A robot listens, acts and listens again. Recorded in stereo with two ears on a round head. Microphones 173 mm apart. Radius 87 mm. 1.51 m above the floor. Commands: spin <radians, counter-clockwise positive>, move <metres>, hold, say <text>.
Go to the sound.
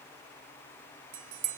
spin -1.22
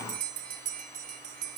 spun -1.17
spin -0.79
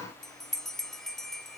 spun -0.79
move 1.0
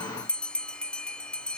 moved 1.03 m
move 1.0
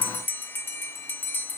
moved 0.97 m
spin 0.17
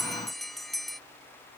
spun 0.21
move 1.0
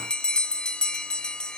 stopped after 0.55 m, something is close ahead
say I am next to the bell.